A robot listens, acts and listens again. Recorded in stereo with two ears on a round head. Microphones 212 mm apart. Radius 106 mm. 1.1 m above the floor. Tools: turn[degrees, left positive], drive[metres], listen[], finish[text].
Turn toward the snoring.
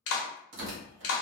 Action: listen[]
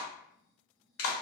Action: turn[30]
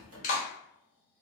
Thought: So it is at 15° right.
Action: turn[-15]
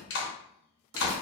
Action: finish[Found it: snoring, straight ahead.]